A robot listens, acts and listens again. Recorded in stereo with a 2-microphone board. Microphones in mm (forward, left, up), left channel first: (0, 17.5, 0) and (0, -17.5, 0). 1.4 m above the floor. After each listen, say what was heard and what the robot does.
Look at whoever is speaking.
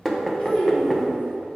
The child speaking: about 30° left or 150° left. Turn 30° left.
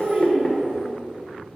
So it is at 15° right. Turn 15° right.
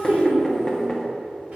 The child speaking is now 40° right. Turn 40° right.
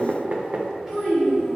The child speaking is now 10° right. Turn 10° right.
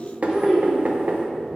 Found it: a child speaking, straight ahead.